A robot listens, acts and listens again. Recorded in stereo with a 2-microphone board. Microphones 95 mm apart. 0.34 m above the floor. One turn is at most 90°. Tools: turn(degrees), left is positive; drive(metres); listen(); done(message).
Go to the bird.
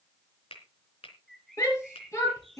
turn(degrees=30)
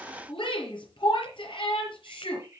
turn(degrees=-30)
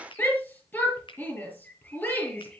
turn(degrees=15)
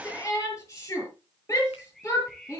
drive(metres=1.0)
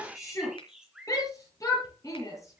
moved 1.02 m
turn(degrees=-10)
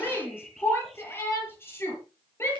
drive(metres=1.0)
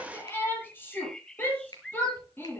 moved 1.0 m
drive(metres=1.0)
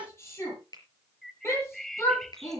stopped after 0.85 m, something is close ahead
done("I am next to the bird.")